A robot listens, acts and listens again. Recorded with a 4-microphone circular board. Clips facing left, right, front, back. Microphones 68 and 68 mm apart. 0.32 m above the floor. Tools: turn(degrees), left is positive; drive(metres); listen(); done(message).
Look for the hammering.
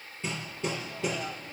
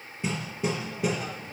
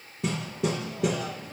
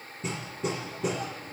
turn(degrees=-15)
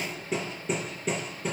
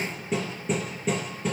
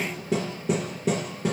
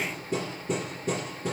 done("Found it: hammering, straight ahead.")